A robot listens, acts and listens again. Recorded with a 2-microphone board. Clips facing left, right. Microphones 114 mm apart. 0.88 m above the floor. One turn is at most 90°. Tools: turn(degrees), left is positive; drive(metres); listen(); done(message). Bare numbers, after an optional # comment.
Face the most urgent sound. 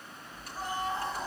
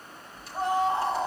# The scream: about 70° right or 110° right.
turn(-70)
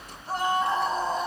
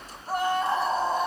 done("Facing the scream.")